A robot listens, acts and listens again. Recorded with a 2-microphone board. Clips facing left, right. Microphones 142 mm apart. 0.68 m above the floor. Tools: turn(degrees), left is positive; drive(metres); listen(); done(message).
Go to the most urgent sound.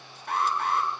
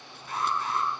turn(degrees=65)
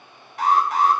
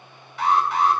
turn(degrees=45)
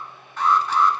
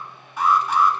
turn(degrees=-10)
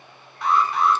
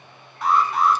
drive(metres=1.0)
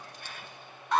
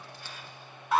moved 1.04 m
drive(metres=1.0)
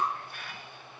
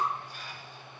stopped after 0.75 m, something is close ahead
listen()
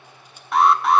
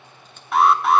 done("Arrived at the alarm, straight ahead.")